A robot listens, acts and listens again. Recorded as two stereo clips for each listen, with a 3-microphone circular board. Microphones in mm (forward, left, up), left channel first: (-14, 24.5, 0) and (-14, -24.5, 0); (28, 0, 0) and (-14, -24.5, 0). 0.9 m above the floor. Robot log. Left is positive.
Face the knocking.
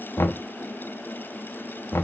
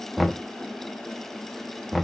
note: The knocking: 125° left.
cmd yaw +125
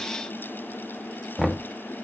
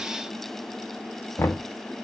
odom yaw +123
end: Found it: knocking, straight ahead.